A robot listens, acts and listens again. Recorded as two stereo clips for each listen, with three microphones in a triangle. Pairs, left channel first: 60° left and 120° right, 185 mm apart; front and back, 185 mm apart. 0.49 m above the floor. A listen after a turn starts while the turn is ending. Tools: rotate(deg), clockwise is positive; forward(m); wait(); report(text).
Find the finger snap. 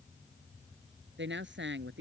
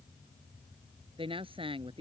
wait()
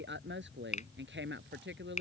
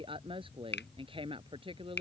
rotate(-10)
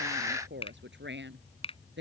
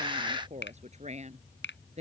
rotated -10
report("Facing the finger snap.")